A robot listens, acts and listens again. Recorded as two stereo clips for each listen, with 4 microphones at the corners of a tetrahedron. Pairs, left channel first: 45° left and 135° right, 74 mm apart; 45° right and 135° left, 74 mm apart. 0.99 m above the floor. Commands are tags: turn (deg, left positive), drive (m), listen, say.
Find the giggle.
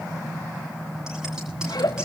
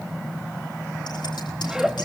<turn deg="55"/>
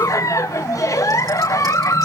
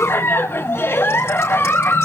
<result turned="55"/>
<turn deg="10"/>
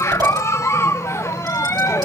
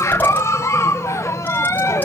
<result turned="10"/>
<say>Facing the giggle.</say>